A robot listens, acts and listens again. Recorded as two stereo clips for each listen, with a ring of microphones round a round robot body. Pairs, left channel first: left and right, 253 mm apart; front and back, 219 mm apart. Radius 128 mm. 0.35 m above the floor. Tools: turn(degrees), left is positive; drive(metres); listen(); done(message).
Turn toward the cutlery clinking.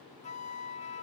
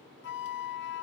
listen()
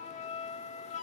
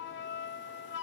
listen()
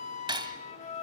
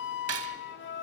turn(degrees=-160)
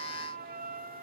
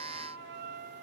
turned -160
listen()
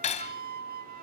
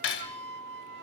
turn(degrees=25)
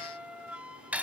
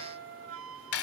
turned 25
done("Found it: cutlery clinking, straight ahead.")